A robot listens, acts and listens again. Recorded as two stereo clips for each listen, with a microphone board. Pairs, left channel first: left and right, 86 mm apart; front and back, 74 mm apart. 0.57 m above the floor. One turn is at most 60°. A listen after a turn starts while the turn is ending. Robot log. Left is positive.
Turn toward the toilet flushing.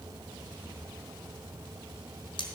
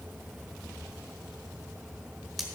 cmd idle
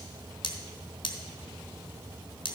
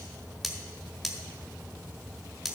cmd idle
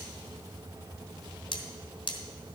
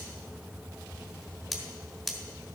end: I can't make out a toilet flushing to turn to.